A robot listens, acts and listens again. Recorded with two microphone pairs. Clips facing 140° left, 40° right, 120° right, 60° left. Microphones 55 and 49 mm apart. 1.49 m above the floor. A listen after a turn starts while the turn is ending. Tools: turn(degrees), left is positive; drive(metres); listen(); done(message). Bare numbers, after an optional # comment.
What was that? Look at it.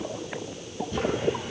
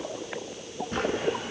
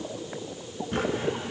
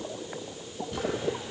# The drawer: 75° right.
turn(-75)
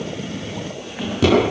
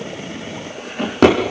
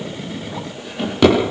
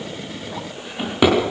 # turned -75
# The drawer is now 15° right.
turn(-15)
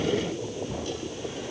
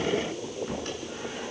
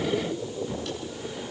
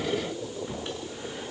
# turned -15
listen()
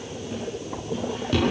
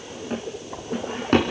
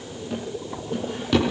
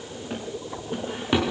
done("Found it: a drawer, straight ahead.")